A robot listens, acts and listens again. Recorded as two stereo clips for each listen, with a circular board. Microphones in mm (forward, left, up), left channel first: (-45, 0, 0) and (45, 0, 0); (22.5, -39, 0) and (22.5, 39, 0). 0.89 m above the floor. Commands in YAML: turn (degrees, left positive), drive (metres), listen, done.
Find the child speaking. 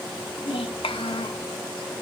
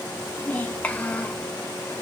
turn: -165
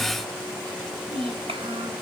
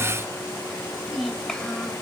turn: -10
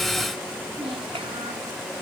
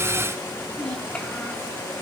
turn: -10
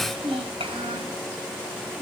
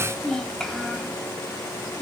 done: "Facing the child speaking."